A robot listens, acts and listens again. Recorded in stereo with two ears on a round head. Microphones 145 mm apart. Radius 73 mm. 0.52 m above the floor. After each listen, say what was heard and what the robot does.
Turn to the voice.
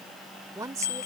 The woman speaking: about 20° right or 160° right. Turn 20° right.
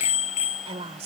So it is at 135° right. Turn 135° right.
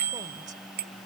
Keep listening.
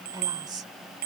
The woman speaking is now 30° right. Turn 30° right.
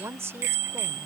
The woman speaking is now 20° right. Turn 20° right.
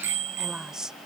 Found it: a woman speaking, straight ahead.